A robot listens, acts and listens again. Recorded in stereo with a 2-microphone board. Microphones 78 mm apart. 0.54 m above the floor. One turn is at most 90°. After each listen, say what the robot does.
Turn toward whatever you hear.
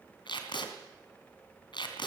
Turn 90° left.
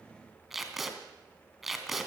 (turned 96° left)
Facing the tape being pulled.